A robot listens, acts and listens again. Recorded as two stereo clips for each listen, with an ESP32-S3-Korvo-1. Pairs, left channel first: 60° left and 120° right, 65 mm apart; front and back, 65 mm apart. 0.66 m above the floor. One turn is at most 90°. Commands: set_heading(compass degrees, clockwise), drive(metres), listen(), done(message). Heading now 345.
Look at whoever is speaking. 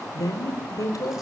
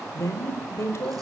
set_heading(305)
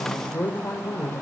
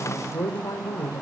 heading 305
set_heading(295)
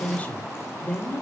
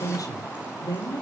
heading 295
done("Found it: a woman speaking, straight ahead.")